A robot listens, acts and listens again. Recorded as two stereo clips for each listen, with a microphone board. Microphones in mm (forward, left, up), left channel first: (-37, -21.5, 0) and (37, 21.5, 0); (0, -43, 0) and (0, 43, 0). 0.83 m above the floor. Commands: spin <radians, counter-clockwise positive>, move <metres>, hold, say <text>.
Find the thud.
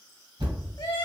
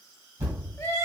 spin 0.52
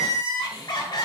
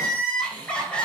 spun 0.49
say I heard a thud from this way, but can't make it out now.